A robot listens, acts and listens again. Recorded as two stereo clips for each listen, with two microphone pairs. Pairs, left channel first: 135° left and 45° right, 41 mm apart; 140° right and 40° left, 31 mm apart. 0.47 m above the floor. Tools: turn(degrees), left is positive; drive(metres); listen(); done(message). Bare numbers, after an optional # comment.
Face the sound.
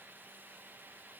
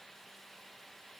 listen()
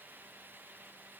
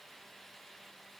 listen()
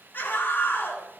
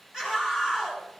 # The scream: 110° left.
turn(110)
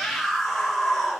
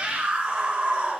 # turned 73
# The scream is now 40° left.
turn(40)
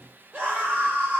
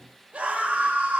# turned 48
# The scream is now 10° right.
turn(-10)
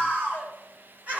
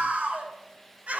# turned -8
done("Found it: a scream, straight ahead, 1 to 2 m away.")